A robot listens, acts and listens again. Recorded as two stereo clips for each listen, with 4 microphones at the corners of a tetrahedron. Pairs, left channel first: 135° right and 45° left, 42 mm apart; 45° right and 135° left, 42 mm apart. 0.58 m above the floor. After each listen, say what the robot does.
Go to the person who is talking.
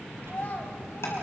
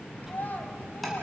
Turn 85° right.
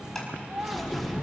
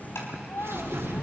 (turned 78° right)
Drive 1.0 m forward.
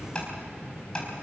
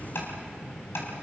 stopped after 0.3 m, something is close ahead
Keep listening.
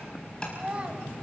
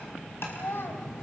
Turn 15° right.
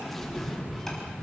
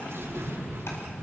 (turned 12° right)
Keep listening.
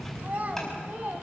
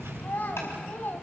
Blocked. The child speaking is further on, straight ahead.